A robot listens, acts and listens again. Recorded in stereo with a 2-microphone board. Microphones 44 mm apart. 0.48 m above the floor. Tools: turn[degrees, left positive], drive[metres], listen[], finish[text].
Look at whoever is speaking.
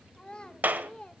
Thought: The child speaking: about 20° left or 160° left.
Action: turn[20]
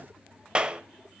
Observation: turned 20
Action: listen[]
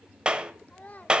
Thought: So it is at 135° left.
Action: turn[135]
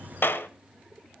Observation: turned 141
Action: listen[]
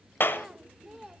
Action: finish[Facing the child speaking, 1 to 2 m away.]